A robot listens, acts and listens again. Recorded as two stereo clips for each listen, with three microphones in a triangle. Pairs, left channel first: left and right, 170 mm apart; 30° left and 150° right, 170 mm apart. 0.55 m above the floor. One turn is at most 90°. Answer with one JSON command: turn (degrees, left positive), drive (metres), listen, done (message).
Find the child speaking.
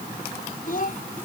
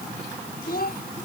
{"turn": 55}
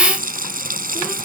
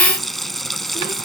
{"listen": true}
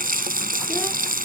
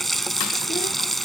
{"listen": true}
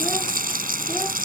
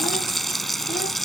{"done": "Facing where the child speaking came from. I can't hear it now."}